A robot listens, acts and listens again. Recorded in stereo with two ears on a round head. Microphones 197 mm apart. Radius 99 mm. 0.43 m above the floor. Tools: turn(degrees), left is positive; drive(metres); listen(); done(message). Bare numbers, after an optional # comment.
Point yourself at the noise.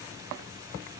listen()
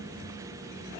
listen()
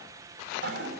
# The toilet flushing: about 50° right or 130° right.
turn(-50)
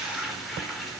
done("Facing the toilet flushing.")